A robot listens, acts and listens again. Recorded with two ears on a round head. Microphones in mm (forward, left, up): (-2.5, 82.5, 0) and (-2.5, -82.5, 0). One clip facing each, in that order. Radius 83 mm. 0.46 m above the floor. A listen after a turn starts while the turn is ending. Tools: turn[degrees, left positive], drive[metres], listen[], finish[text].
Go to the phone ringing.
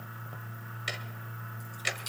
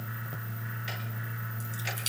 Action: listen[]
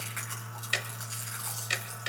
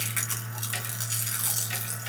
Action: listen[]
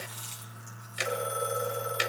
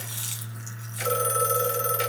Thought: The phone ringing: about 70° right or 110° right.
Action: turn[-70]
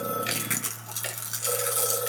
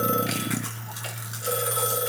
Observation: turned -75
Action: listen[]
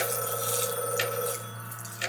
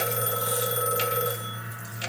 Thought: So it is at 35° right.
Action: turn[-35]
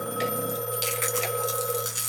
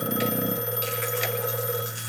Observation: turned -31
Action: drive[1.0]
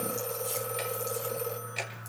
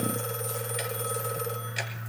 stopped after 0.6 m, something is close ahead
Action: listen[]
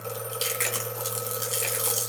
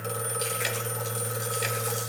Action: finish[Something is in my way. I am facing the phone ringing but have not reached it.]